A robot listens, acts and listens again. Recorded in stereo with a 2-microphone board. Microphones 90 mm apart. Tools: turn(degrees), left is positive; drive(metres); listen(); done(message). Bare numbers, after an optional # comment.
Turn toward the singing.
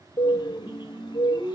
# The singing: about 35° right or 145° right.
turn(-35)
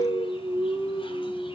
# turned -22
# So it is at 125° right.
turn(-125)
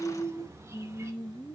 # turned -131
# The singing is now 10° left.
turn(10)
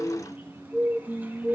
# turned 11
done("Found it: singing, straight ahead, 2 to 4 m away.")